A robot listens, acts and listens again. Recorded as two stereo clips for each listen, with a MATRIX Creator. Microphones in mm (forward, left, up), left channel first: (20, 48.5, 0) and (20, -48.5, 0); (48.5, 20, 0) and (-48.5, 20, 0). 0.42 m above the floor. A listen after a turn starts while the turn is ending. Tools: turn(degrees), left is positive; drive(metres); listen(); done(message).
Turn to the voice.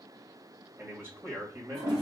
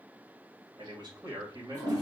turn(degrees=-145)
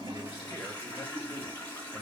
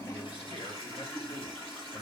turn(degrees=25)
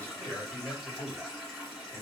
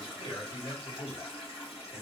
turn(degrees=25)
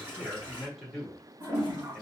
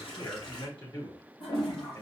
done("Found it: a man speaking, straight ahead, 2 to 4 m away.")